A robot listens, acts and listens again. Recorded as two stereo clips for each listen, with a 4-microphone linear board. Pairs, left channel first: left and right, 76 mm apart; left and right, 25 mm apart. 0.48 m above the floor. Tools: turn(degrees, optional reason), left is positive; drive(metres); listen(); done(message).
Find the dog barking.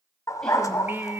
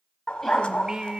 turn(degrees=45, reason="The dog barking: about 45° left or 135° left.")
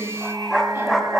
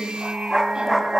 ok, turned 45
done("Found it: a dog barking, straight ahead, 1 to 2 m away.")